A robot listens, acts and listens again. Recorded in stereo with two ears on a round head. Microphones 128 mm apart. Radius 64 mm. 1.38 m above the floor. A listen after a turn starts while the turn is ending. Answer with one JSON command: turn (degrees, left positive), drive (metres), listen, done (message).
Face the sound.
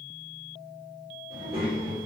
{"turn": -45}
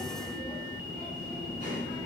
{"turn": -85}
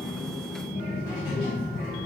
{"turn": 30}
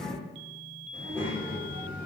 {"turn": 15}
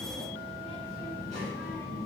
{"done": "Found it: a child speaking, straight ahead, 1 to 2 m away."}